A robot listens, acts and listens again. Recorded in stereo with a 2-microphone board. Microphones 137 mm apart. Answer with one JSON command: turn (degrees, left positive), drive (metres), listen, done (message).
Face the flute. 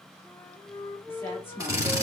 {"turn": 15}
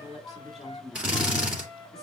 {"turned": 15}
{"turn": 150}
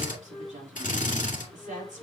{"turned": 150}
{"turn": 35}
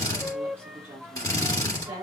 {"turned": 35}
{"turn": -10}
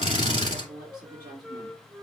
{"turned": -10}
{"done": "Found it: a flute, straight ahead."}